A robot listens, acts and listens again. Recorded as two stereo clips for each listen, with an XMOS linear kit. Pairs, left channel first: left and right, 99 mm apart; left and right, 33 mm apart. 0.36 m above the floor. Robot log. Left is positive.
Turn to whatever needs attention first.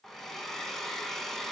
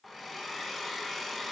cmd idle
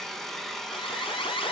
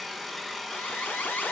note: The alarm: about 65° left or 115° left.
cmd yaw +65
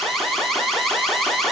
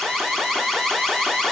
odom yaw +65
end: Facing the alarm, 2 to 4 m away.